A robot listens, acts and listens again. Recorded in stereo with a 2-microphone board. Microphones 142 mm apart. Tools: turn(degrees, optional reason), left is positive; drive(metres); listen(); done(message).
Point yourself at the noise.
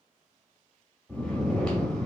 turn(degrees=30)
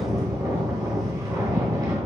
turn(degrees=-25, reason="So it is at 25° right.")
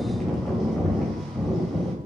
done("Found it: snoring, straight ahead, 1 to 2 m away.")